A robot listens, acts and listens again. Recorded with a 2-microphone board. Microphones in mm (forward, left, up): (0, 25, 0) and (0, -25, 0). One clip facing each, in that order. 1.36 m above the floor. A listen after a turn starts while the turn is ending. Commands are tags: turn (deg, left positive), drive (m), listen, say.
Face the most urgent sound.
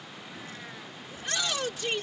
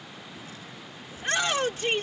<turn deg="-40"/>
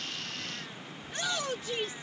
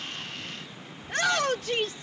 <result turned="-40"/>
<turn deg="-100"/>
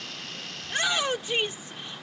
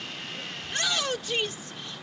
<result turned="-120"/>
<turn deg="20"/>
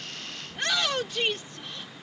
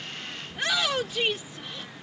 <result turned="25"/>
<say>Facing the shout.</say>